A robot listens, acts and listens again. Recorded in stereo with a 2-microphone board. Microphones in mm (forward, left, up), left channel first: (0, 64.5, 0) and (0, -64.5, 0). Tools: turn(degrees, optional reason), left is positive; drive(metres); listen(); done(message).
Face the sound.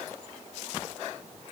listen()
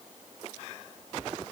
listen()
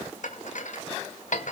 turn(degrees=70, reason="The dishes clattering: about 70° left or 110° left.")
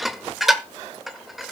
done("Found it: dishes clattering, straight ahead, 1 to 2 m away.")